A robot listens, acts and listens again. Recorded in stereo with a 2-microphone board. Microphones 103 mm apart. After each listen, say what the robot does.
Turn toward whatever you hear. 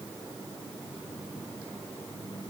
Keep listening.
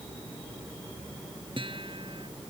Turn 55° right.
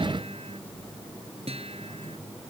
Turn 70° right.
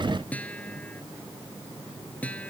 Turn 15° left.
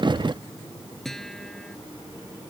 Found it: a guitar, straight ahead.